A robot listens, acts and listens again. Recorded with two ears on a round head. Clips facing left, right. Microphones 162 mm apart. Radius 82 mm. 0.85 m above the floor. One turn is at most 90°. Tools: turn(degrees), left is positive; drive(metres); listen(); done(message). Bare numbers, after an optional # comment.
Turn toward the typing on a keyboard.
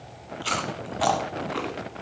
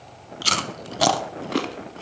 listen()
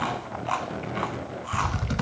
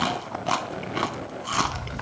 # The typing on a keyboard: about 55° left or 125° left.
turn(55)
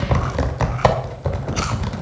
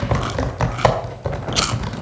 done("Facing the typing on a keyboard.")